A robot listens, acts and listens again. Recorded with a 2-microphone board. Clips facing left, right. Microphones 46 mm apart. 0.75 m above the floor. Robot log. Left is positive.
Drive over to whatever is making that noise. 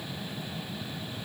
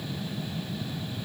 cmd idle
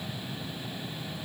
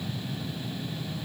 cmd idle
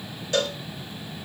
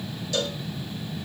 note: The cowbell: about 40° left or 140° left.
cmd yaw +40
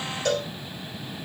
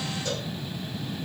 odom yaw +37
note: So it is at 100° left.
cmd yaw +100
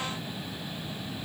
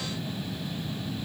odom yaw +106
cmd idle
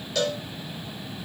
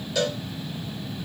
cmd fwd 1.0
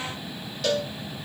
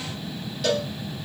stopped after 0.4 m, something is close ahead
end: Blocked. The cowbell is further on, straight ahead.